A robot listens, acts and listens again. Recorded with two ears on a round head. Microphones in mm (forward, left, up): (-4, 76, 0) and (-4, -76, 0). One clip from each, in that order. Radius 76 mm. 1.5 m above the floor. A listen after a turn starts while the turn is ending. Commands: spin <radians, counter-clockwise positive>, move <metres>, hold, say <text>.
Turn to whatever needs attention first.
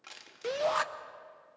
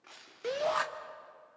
spin 0.52
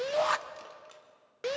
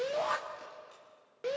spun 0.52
spin 2.36
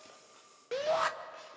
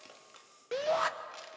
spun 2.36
say Facing the shout, under 1 m away.